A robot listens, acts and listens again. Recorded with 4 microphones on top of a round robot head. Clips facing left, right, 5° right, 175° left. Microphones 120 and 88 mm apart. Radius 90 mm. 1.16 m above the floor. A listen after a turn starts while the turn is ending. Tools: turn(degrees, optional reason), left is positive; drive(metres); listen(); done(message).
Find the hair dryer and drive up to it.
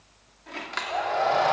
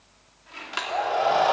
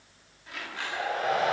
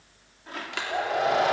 turn(degrees=-170, reason="The hair dryer: 170° right.")
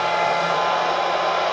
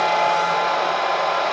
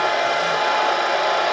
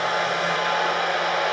drive(metres=1.0)
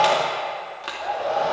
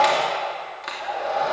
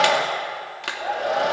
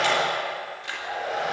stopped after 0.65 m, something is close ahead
turn(degrees=10, reason="The hair dryer is now 10° left.")
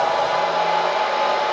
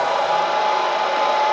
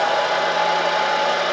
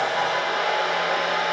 done("Blocked. The hair dryer is further on, straight ahead.")